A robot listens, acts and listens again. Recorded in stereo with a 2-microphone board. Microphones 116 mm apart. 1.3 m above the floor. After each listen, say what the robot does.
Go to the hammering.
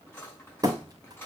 Turn 35° right.
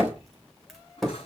Drive 1.0 m forward.
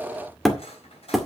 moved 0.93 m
Drive 1.0 m forward.
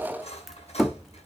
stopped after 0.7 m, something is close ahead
I am next to the hammering.